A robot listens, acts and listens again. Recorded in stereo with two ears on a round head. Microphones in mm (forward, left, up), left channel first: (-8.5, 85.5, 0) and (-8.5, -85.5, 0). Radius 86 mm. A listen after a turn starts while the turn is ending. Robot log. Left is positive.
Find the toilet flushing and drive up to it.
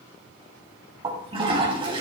note: The toilet flushing: about 30° right or 150° right.
cmd yaw -30
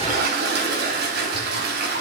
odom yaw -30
note: So it is at 120° right.
cmd yaw -120
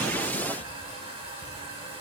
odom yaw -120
note: The toilet flushing is now 30° right.
cmd yaw -30
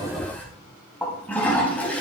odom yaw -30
note: The toilet flushing is now 10° left.
cmd yaw +10
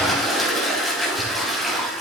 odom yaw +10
cmd fwd 1.0
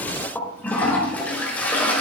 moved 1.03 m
note: The toilet flushing is now 10° left.
cmd yaw +10
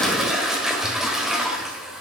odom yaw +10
cmd fwd 1.0
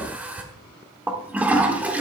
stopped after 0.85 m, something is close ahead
note: The toilet flushing is now 10° right.
cmd yaw -10
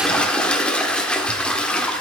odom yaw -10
end: Arrived at the toilet flushing, straight ahead.